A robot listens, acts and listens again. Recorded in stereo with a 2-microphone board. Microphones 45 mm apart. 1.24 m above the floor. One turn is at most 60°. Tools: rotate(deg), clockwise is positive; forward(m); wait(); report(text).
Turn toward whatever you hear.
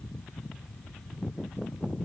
wait()
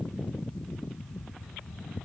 wait()
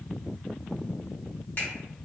rotate(-40)
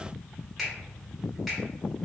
report("Found it: a finger snap, straight ahead.")